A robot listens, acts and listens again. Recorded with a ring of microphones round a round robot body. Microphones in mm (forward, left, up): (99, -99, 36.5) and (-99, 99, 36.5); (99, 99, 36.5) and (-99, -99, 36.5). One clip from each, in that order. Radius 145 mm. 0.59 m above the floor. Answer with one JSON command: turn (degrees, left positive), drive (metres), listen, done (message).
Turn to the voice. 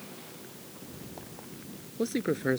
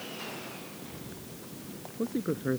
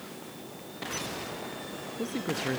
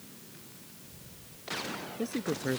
{"turn": -45}
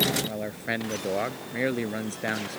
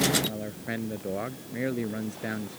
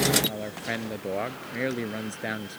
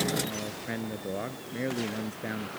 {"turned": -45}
{"done": "Facing the man speaking."}